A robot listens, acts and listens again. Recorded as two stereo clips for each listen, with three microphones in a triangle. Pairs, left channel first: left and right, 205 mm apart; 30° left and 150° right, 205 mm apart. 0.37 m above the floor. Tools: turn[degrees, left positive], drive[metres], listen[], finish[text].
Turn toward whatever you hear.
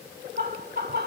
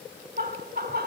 Thought: The laughter: 120° right.
Action: turn[-120]
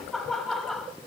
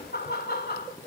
Action: finish[Facing the laughter, 1 to 2 m away.]